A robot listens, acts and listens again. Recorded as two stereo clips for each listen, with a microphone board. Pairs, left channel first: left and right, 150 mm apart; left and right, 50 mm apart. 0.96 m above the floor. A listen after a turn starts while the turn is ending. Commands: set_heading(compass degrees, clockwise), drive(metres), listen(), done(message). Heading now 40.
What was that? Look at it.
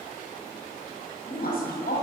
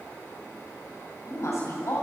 set_heading(310)
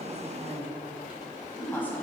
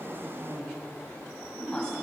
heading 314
set_heading(299)
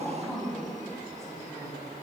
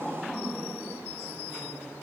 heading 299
done("Facing the woman speaking.")